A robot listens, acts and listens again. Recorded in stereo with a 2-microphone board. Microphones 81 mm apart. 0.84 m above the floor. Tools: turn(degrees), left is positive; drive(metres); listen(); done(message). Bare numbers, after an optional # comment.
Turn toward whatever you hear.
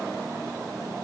listen()
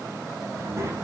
# The child speaking: about 35° right or 145° right.
turn(-35)
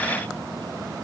listen()
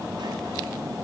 listen()
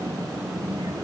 # So it is at 110° right.
turn(-110)
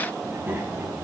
# The child speaking is now 25° right.
turn(-25)
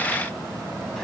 listen()
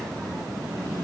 done("Found it: a child speaking, straight ahead.")